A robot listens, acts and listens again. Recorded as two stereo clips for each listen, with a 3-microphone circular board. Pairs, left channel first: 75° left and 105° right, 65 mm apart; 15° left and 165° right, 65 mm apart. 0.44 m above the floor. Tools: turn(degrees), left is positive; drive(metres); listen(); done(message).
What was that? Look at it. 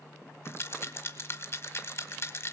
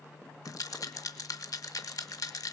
turn(degrees=30)
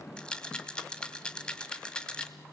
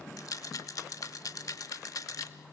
done("Facing the rattle.")